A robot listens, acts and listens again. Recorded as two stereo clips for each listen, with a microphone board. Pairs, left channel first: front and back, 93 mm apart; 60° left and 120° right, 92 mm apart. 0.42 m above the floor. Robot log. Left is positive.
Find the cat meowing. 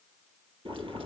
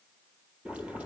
cmd idle
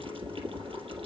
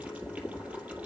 cmd idle
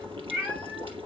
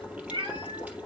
note: The cat meowing: 120° right.
cmd yaw -120
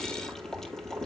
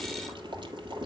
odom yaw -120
cmd idle
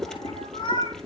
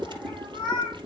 note: The cat meowing is now 20° right.
cmd yaw -20
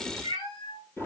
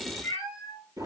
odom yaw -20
end: Facing the cat meowing.